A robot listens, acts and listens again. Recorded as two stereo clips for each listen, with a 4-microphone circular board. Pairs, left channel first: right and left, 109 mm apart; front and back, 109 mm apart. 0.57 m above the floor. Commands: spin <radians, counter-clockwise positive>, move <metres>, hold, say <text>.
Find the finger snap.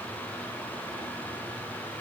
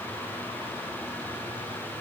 hold
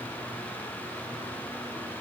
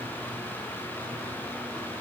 hold
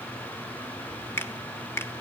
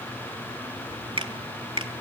spin -2.71
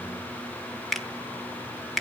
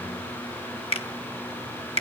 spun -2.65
say Facing the finger snap.